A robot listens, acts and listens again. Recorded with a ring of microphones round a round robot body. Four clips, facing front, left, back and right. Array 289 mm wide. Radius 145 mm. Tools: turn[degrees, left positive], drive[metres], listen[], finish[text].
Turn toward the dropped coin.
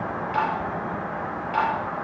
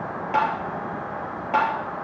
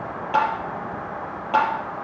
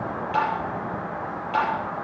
Action: listen[]
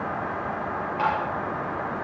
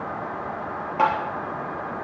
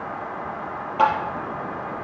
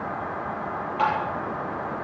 Action: listen[]
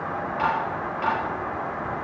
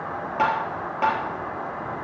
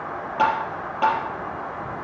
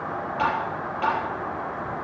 Action: finish[I can't make out a dropped coin to turn to.]